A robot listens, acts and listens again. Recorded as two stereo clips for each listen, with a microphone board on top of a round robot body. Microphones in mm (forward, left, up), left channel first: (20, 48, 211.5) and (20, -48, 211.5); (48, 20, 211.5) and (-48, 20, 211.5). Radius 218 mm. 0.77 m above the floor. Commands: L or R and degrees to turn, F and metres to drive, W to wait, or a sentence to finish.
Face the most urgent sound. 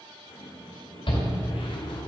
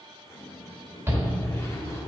L115
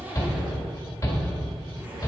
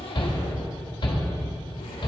L30
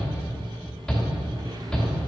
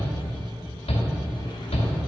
Facing the shout, 2 to 4 m away.